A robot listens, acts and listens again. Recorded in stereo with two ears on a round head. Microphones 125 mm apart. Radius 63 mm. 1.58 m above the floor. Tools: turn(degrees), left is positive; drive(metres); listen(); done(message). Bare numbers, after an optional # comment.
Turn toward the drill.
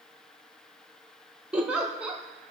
listen()
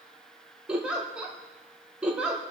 listen()
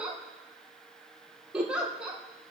done("I can't make out a drill, only a giggle.")